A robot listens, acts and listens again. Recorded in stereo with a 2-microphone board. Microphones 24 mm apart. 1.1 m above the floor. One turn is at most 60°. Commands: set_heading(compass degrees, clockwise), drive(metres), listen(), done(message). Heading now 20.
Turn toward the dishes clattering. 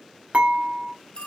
set_heading(80)
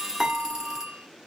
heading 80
set_heading(110)
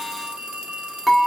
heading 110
done("Facing the dishes clattering.")